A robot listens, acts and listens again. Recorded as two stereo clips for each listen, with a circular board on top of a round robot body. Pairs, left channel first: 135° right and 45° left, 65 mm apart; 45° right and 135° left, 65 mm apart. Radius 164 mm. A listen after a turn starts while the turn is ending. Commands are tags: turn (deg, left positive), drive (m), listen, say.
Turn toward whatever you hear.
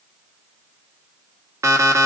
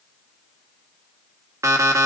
<turn deg="85"/>
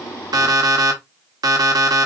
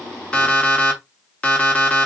<turn deg="25"/>
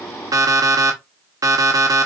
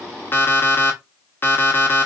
<turn deg="10"/>
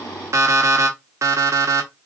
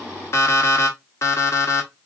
<say>Facing the alarm clock.</say>